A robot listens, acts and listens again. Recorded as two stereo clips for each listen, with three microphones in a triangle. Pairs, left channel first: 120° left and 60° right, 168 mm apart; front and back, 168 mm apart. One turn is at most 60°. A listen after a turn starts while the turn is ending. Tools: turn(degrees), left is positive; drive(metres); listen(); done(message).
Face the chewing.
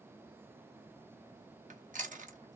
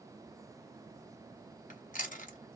turn(degrees=-30)
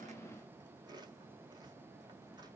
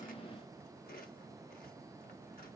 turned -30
listen()
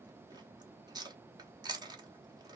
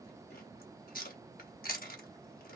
done("Found it: chewing, straight ahead.")